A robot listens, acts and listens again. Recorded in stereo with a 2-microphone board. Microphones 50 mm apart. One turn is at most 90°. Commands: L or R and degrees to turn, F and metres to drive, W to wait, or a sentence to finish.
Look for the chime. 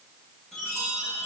L30
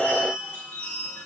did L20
L90
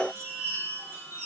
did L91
L65
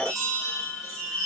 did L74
R10
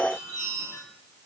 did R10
Found it: a chime, straight ahead, over 4 m away.